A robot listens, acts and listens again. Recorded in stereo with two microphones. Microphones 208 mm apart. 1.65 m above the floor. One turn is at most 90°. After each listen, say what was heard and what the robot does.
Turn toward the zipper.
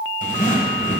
The zipper: about 40° left or 140° left. Turn 40° left.
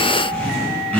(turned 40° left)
So it is at 10° left. Turn 10° left.
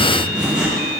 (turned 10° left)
Facing the zipper, 1 to 2 m away.